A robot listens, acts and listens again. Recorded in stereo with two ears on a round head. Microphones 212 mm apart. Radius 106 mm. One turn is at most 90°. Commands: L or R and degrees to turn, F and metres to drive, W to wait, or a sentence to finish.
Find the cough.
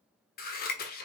W
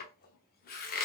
W
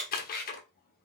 I can't make out a cough to turn to.